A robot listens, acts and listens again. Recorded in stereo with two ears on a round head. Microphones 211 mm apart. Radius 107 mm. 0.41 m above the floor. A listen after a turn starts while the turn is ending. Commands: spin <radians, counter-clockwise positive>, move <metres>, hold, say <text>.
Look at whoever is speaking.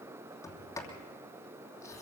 hold
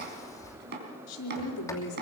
spin 1.57
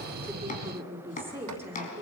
spin -0.17
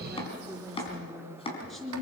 say Facing the woman speaking, over 4 m away.